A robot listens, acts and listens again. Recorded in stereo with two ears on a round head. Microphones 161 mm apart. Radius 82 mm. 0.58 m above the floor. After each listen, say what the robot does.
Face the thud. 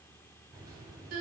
Keep listening.
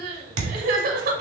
Turn 90° right.
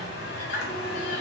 Facing where the thud came from. I can't hear it now.